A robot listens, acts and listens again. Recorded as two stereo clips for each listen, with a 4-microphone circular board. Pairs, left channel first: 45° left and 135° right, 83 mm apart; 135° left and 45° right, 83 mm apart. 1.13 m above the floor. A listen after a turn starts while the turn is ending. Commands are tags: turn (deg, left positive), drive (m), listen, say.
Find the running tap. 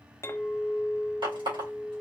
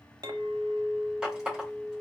<turn deg="-125"/>
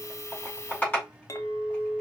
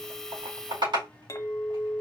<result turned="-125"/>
<turn deg="-20"/>
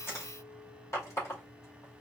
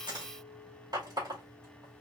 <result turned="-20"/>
<say>Facing the running tap, 2 to 4 m away.</say>